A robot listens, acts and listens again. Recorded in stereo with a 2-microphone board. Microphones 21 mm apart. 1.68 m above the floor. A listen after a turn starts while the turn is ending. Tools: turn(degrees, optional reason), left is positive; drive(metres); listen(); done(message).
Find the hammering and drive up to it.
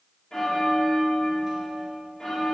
listen()
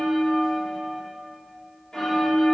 turn(degrees=-30)
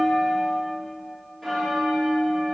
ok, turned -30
listen()
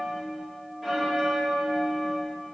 listen()
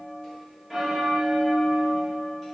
done("I heard hammering, but can't make it out now. It was about 20° left or 140° right. I did not reach it.")